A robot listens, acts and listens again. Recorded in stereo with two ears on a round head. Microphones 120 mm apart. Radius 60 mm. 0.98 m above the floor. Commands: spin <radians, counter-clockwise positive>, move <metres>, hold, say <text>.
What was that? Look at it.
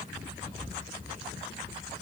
hold
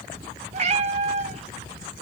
spin -0.87
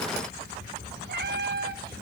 spin -1.40
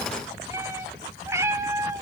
spin -0.35
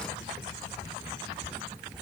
hold
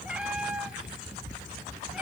spin -0.17
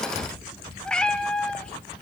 say Facing the cat meowing.